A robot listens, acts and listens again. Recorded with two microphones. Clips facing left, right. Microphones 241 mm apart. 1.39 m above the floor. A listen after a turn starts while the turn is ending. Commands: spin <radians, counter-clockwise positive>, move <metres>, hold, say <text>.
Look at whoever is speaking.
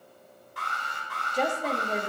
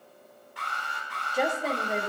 spin -0.52
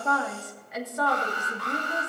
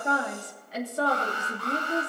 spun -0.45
spin -2.53
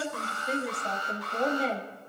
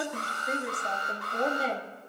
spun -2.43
say Facing the woman speaking.